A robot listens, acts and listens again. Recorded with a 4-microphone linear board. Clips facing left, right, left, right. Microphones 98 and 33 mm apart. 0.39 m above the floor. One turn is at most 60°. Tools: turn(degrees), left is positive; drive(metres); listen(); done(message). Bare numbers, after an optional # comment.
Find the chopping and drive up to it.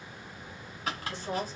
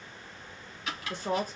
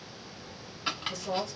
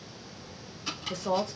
# The chopping: about 40° left or 140° left.
turn(40)
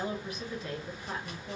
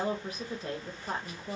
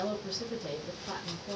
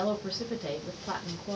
listen()
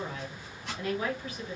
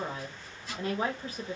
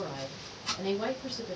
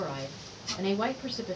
# So it is at 100° left.
turn(60)
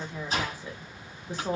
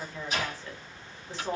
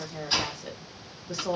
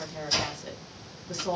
# The chopping is now 40° left.
turn(40)
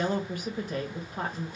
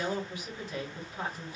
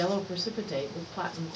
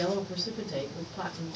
listen()
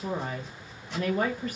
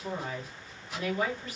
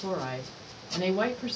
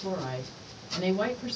listen()
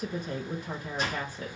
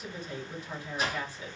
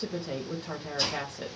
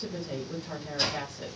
drive(1.0)
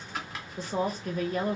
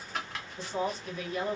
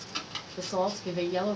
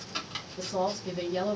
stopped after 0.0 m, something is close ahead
done("Something is in my way. I am facing the chopping but have not reached it.")